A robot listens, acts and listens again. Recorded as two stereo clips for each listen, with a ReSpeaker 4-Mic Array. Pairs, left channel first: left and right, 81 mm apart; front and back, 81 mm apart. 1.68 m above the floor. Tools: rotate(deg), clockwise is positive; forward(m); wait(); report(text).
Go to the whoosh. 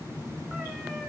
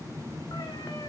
wait()
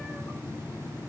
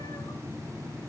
wait()
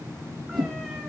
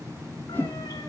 rotate(65)
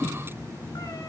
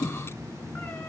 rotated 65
forward(1.0)
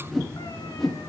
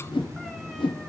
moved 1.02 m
forward(1.0)
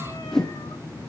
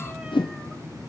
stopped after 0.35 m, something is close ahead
report("I am next to the whoosh.")